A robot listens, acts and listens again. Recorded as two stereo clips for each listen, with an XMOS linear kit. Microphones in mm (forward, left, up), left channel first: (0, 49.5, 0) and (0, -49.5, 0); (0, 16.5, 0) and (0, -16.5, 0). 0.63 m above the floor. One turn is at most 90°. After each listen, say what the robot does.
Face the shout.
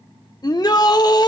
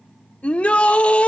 Turn 40° left.
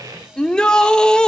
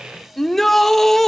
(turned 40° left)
Turn 10° left.
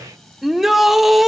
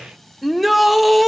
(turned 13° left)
Found it: a shout, straight ahead.